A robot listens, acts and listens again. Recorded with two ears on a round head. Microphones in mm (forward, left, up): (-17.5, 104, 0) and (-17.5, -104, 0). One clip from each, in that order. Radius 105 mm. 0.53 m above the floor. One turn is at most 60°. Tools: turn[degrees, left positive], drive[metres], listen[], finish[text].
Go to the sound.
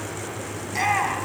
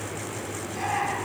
Thought: The shout: about 70° left or 110° left.
Action: turn[60]
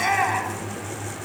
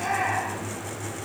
Thought: So it is at 50° left.
Action: turn[50]
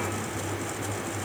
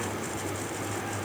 Action: listen[]
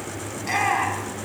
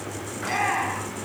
Thought: The shout is now 10° left.
Action: turn[10]
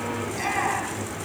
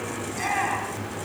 Action: drive[1.0]
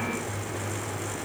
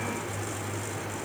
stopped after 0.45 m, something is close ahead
Action: listen[]
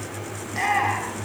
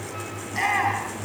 Action: finish[Something is in my way. I am facing the shout but have not reached it.]